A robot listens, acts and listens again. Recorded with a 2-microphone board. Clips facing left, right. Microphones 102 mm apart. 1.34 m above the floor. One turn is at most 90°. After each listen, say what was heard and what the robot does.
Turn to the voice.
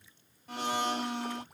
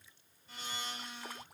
Keep listening.
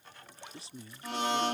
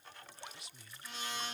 The man speaking: about 35° left or 145° left. Turn 35° left.
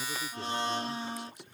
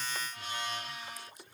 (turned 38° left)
Keep listening.
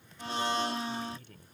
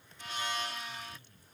So it is at 105° left. Turn 90° left.
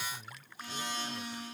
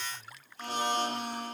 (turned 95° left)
The man speaking is now 10° left. Turn 10° left.
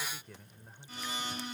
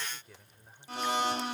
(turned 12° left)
Found it: a man speaking, straight ahead.